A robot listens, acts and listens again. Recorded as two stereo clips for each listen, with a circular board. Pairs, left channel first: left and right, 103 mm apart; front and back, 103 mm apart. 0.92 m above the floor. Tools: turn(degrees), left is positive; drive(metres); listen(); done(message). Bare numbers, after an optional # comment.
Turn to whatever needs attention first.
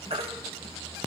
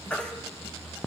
# The baby crying: 80° right.
turn(-80)
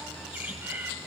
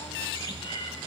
listen()
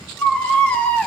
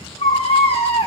# The baby crying is now 15° left.
turn(15)
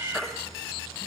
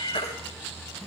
done("Found it: a baby crying, straight ahead, 1 to 2 m away.")